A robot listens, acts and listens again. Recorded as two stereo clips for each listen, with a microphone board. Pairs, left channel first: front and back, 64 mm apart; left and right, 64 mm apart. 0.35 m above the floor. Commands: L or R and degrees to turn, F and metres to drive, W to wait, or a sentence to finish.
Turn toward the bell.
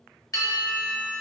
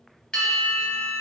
L10
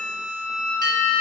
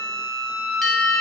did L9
Facing the bell.